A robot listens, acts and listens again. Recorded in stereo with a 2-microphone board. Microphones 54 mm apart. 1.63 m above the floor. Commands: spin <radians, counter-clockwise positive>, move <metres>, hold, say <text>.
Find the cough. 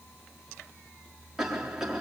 spin -0.52
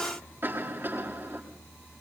spin -2.53
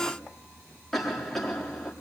say Facing the cough, over 4 m away.